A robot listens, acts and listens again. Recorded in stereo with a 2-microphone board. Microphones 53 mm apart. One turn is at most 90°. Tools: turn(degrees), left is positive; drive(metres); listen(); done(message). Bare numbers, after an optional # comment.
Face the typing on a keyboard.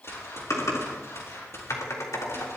turn(90)
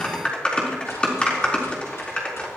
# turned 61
# So it is at 20° left.
turn(20)
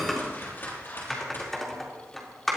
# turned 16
done("Facing the typing on a keyboard.")